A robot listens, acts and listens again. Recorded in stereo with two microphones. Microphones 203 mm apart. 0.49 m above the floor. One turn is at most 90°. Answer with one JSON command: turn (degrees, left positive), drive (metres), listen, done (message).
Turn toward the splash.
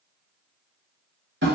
{"listen": true}
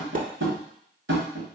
{"turn": -45}
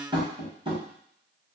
{"listen": true}
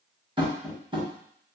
{"done": "I heard a splash, but can't make it out now. It was about straight ahead or 90° right."}